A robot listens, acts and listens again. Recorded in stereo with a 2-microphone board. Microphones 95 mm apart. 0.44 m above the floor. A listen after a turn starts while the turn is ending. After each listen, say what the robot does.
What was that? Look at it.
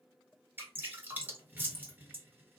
Turn 20° right.
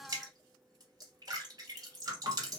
Turn 140° right.
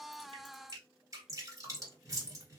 Turn 40° right.
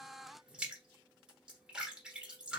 Turn 10° right.
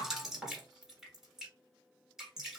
Found it: dripping, straight ahead, 1 to 2 m away.